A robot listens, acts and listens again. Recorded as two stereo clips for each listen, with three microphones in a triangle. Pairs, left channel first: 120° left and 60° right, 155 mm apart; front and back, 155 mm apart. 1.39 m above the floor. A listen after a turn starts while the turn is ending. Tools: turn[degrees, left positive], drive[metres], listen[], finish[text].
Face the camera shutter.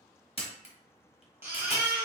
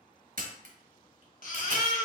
Thought: The camera shutter: 165° left.
Action: turn[165]
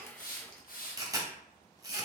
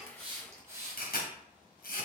Action: finish[Facing the camera shutter, 1 to 2 m away.]